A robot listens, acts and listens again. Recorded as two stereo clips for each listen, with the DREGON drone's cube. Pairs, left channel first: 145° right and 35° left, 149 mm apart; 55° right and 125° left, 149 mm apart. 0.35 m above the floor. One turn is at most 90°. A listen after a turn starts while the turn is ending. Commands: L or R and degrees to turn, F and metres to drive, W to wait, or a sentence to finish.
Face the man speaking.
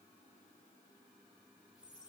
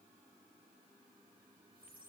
W
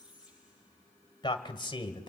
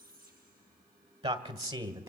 L90
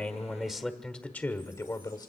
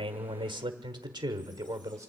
L90
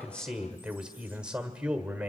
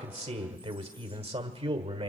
L90
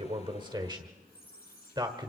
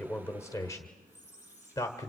Found it: a man speaking, straight ahead, 1 to 2 m away.